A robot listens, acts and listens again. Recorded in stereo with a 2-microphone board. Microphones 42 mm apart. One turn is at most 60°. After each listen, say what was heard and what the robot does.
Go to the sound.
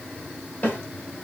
The snare drum: about 45° left or 135° left. Turn 45° left.
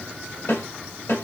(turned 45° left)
So it is at 90° left. Turn 60° left.
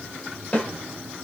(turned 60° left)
The snare drum is now 30° left. Turn 30° left.
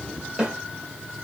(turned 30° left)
The snare drum is now 15° right. Turn 15° right.
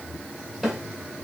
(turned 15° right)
Drive 1.0 m forward.
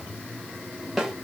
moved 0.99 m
Drive 1.0 m forward.
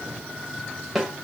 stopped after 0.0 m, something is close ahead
I am next to the snare drum.